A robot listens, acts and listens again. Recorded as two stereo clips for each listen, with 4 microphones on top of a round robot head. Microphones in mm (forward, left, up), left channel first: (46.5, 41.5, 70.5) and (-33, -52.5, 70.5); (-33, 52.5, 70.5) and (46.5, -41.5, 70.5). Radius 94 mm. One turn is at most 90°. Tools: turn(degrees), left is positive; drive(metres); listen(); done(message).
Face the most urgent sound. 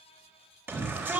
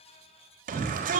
turn(degrees=-55)
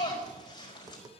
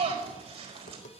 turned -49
done("Found it: a shout, straight ahead.")